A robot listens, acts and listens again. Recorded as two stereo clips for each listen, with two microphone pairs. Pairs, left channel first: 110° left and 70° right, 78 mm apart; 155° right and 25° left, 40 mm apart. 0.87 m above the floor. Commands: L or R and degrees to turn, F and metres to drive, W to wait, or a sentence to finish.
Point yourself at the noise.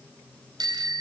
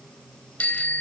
R100
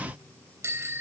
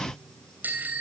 R15
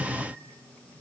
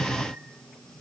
W
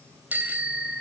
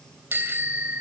Found it: a bicycle bell, straight ahead, 2 to 4 m away.